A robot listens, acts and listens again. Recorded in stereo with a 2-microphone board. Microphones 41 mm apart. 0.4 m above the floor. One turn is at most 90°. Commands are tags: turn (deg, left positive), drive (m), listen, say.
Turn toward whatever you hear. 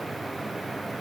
<listen/>
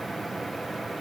<listen/>
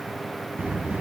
<turn deg="-60"/>
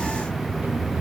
<turn deg="-60"/>
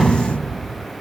<say>Facing the sliding door, under 1 m away.</say>